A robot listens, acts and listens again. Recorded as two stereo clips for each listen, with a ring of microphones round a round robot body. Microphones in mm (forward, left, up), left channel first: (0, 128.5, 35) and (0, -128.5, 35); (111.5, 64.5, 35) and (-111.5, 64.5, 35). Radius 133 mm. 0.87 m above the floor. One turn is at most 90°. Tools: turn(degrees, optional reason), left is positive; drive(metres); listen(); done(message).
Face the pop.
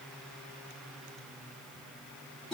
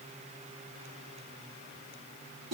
listen()
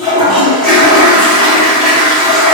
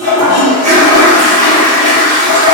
listen()
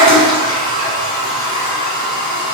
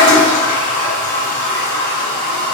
done("I can't make out a pop to turn to.")